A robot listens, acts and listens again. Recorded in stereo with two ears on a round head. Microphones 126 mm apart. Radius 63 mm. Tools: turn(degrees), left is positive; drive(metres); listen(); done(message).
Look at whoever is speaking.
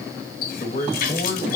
turn(degrees=35)
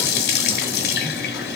listen()
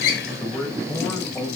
done("Facing the man speaking.")